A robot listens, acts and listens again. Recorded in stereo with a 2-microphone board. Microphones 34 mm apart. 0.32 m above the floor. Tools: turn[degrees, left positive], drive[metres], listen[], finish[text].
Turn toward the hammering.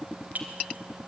Action: listen[]
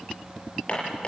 Thought: The hammering: about 30° left or 150° left.
Action: turn[30]
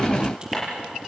Action: listen[]
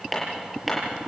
Action: finish[Facing the hammering.]